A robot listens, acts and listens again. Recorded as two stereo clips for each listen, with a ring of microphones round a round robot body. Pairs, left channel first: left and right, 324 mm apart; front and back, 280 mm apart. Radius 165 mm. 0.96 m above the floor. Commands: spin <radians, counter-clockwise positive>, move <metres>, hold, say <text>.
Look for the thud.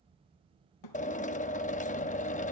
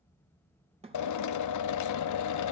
spin 1.92
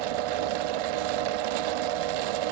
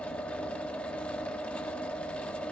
say Facing where the thud came from. I can't hear it now.